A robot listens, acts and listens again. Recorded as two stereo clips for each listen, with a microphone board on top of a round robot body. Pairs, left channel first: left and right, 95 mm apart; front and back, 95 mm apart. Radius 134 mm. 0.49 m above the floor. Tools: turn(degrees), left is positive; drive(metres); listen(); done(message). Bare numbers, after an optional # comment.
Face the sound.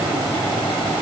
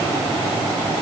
listen()
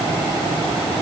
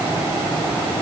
listen()
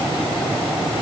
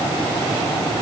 done("I can't make out anything to turn to.")